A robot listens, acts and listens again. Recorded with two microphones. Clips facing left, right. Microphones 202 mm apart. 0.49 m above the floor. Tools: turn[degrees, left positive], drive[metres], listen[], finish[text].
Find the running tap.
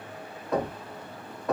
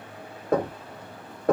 Action: listen[]
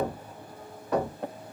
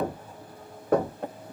Action: listen[]
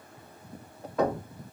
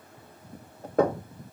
Action: finish[I can't make out a running tap to turn to.]